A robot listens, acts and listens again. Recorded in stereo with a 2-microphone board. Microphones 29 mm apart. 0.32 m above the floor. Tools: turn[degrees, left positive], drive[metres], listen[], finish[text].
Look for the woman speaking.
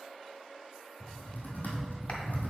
Action: listen[]
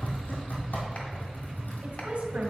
Thought: The woman speaking: about 50° right or 130° right.
Action: turn[-50]
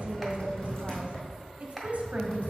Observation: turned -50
Thought: So it is at 65° right.
Action: turn[-65]
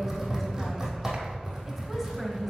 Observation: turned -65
Thought: The woman speaking is now 10° right.
Action: turn[-10]
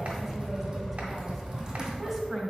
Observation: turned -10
Action: finish[Facing the woman speaking, 1 to 2 m away.]